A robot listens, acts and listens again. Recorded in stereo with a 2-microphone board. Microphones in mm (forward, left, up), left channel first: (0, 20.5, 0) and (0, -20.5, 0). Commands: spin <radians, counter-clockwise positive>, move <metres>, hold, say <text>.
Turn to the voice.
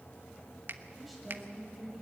spin 0.52
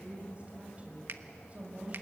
spin -0.52
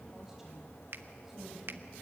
hold
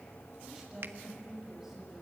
spin -0.17
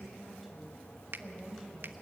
say Facing the woman speaking.